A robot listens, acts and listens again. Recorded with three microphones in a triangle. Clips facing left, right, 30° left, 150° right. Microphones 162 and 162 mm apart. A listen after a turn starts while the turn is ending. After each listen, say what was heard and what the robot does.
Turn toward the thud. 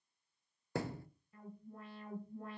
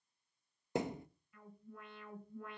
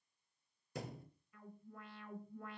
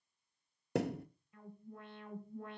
The thud: 160° right. Turn 160° right.
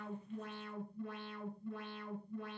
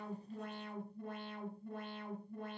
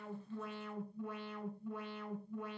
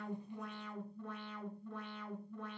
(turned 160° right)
Facing where the thud came from. I can't hear it now.